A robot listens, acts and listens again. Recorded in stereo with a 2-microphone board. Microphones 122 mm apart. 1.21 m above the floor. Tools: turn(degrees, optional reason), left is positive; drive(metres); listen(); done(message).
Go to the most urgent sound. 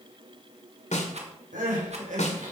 turn(degrees=-90)
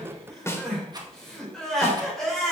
drive(metres=1.0)
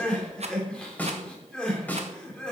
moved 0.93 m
drive(metres=1.0)
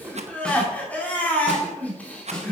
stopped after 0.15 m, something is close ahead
turn(degrees=10, reason="The crying is now 10° left.")
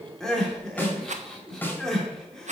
done("Something is in my way. I am facing the crying but have not reached it.")